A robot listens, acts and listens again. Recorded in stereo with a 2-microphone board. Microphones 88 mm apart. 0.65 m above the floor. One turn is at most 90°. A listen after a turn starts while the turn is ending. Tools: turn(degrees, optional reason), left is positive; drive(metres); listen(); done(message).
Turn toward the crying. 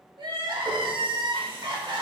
turn(degrees=-55, reason="The crying: about 55° right or 125° right.")
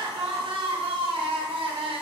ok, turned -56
turn(degrees=-70, reason="So it is at 70° right.")
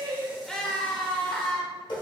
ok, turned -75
done("Found it: crying, straight ahead, under 1 m away.")